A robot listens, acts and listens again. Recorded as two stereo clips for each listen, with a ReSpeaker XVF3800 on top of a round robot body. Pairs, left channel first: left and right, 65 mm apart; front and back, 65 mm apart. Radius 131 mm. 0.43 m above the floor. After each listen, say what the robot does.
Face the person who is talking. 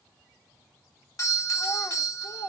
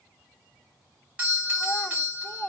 Turn 60° left.
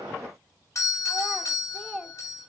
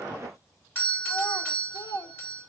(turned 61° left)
Facing the child speaking, 1 to 2 m away.